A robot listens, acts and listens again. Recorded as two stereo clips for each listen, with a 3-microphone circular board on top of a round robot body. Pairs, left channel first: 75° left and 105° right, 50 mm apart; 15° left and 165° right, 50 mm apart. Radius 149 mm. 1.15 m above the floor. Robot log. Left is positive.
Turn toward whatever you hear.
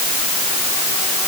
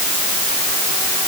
cmd idle
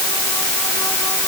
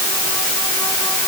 cmd idle
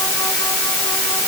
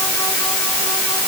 end: I can't make out anything.